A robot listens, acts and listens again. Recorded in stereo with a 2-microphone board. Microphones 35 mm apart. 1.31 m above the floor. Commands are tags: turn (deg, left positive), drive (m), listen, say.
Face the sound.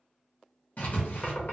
<turn deg="50"/>
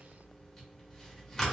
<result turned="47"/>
<turn deg="15"/>
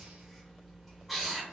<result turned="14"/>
<say>Found it: writing, straight ahead, under 1 m away.</say>